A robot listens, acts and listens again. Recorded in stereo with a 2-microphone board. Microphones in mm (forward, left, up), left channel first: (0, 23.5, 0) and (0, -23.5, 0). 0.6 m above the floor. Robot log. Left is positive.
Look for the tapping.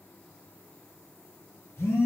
cmd idle
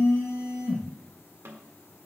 note: The tapping: about 60° right or 120° right.
cmd yaw -60
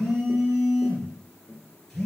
note: So it is at 20° right.
cmd yaw -20
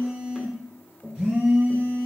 end: Facing the tapping, 1 to 2 m away.